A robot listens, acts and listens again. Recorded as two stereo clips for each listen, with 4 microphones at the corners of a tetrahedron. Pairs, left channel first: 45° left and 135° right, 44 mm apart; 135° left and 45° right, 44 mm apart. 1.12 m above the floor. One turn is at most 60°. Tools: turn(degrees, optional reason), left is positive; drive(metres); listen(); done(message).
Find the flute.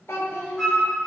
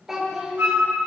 turn(degrees=-45, reason="The flute: 45° right.")
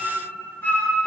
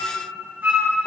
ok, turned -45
done("Found it: a flute, straight ahead, 2 to 4 m away.")